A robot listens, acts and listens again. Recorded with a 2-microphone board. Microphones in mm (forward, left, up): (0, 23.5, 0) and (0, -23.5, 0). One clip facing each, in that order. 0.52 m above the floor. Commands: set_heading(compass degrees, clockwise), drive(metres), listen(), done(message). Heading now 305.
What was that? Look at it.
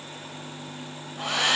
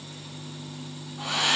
set_heading(245)
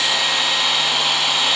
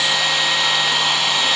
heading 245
done("Facing the hair dryer.")